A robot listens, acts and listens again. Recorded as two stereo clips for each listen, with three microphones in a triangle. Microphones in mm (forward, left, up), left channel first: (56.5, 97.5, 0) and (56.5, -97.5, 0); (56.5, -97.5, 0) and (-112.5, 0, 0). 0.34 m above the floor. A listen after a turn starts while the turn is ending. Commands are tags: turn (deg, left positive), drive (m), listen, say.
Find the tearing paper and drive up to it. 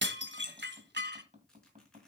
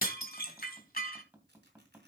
<turn deg="175"/>
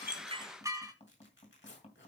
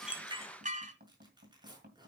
<turn deg="85"/>
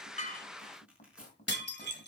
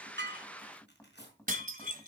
<drive m="1.0"/>
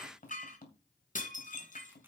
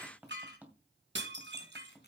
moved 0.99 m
<listen/>
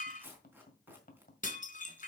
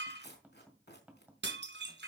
<turn deg="-10"/>
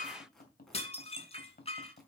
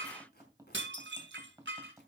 <drive m="1.0"/>
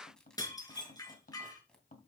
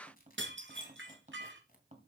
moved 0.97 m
<drive m="1.0"/>
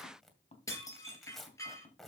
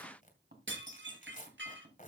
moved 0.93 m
<drive m="1.0"/>
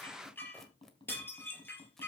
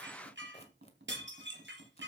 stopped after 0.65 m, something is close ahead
<listen/>
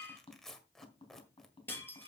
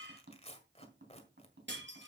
<say>Arrived at the tearing paper, straight ahead.</say>